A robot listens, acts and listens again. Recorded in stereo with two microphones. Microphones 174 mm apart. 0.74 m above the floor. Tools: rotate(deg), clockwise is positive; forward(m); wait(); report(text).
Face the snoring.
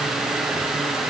wait()
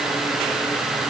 wait()
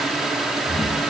rotate(-35)
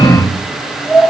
report("Facing the snoring.")